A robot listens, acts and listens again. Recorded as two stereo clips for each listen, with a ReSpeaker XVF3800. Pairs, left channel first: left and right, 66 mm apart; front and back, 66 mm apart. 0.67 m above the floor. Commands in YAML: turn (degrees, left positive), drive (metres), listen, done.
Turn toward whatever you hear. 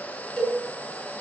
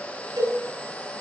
turn: 170
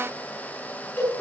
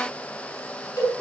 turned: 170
turn: 30
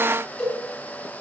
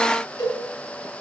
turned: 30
turn: 15
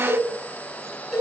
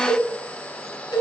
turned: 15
done: "Found it: a cowbell, straight ahead."